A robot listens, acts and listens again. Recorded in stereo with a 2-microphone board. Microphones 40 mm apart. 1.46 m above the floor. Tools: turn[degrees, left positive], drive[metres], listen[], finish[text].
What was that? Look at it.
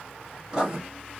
Thought: The writing: about 15° right or 165° right.
Action: turn[-15]
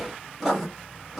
Action: finish[Facing the writing, 2 to 4 m away.]